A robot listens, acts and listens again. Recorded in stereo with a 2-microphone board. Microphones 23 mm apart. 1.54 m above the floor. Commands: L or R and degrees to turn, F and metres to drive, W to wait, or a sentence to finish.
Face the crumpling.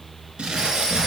R50
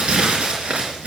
R75
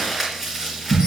R15
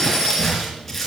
Found it: crumpling, straight ahead, 2 to 4 m away.